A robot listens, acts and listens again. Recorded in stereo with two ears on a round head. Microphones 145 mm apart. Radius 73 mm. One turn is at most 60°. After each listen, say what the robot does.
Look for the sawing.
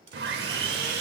Turn 60° right.
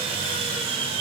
Turn 35° right.
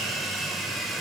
Facing the sawing, under 1 m away.